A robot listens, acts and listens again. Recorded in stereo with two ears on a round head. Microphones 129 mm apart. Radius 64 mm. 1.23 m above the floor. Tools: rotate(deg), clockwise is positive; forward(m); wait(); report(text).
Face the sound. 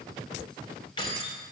rotate(-35)
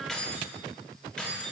report("Facing the keys jangling.")